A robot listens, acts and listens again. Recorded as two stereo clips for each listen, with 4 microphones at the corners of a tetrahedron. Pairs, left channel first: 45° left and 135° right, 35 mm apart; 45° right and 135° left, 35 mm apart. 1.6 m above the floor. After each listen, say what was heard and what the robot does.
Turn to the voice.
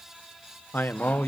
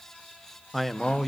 The man speaking: 45° left. Turn 45° left.
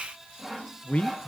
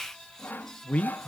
Facing the man speaking.